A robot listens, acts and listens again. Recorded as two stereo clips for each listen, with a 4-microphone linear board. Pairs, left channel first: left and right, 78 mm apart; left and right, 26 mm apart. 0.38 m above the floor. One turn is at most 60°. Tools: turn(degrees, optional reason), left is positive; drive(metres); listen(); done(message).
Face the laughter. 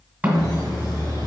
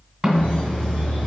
turn(degrees=60, reason="The laughter: about 65° left or 115° left.")
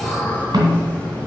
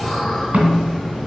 turn(degrees=15, reason="So it is at 15° left.")
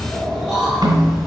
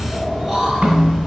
done("Found it: laughter, straight ahead.")